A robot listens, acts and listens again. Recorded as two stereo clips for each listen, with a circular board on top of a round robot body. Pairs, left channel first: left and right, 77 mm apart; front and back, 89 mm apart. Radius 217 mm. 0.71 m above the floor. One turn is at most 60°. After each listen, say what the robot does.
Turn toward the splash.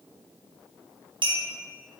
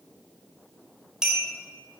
Keep listening.
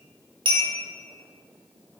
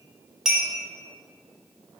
Keep listening.
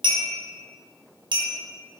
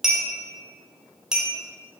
I can't make out a splash to turn to.